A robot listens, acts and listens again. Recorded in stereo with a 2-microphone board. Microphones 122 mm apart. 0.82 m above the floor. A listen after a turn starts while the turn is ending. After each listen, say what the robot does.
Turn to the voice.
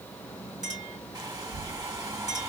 Turn 50° right.
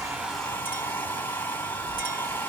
Turn 50° right.
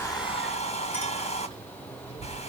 Turn 45° left.
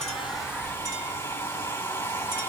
Facing the child speaking, 1 to 2 m away.